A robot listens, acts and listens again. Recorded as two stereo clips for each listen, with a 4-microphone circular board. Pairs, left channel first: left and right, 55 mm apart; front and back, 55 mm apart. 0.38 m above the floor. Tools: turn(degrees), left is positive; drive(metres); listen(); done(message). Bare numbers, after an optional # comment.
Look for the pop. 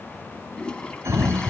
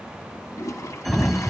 listen()
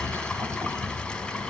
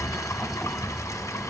listen()
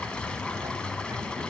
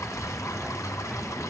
done("I can't make out a pop, only a sliding door and a toilet flushing.")